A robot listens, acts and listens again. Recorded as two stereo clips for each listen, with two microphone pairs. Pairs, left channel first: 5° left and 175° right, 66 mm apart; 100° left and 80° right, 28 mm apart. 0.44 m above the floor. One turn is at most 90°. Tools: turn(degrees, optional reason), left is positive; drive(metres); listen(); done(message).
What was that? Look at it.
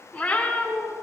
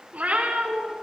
turn(degrees=-60, reason="The cat meowing: 60° right.")
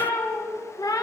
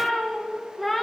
turn(degrees=20, reason="The cat meowing is now 20° left.")
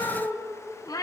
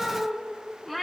turn(degrees=15, reason="The cat meowing is now 15° left.")
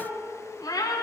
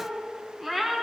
turn(degrees=15, reason="The cat meowing is now 15° left.")
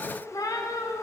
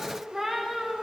turn(degrees=10, reason="The cat meowing is now 10° left.")
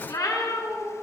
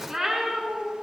turn(degrees=10, reason="The cat meowing is now 10° left.")
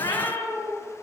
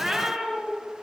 done("Found it: a cat meowing, straight ahead.")